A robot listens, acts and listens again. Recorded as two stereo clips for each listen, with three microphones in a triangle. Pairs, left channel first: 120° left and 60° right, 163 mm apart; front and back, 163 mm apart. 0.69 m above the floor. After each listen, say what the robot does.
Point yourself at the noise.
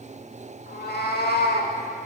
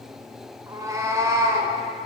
Turn 110° left.
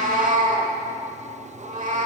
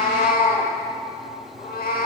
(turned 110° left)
Turn 25° right.
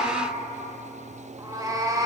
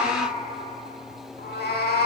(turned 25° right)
Found it: a cat meowing, straight ahead.